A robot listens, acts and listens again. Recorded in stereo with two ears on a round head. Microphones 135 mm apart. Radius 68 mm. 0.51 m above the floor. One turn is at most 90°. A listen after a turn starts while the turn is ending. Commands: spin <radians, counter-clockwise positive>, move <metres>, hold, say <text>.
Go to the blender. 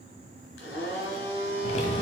spin 1.57
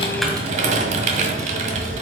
hold
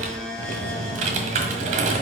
move 1.0
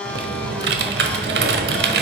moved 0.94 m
move 1.0
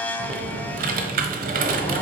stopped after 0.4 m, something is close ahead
spin 0.17
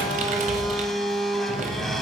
say I am next to the blender.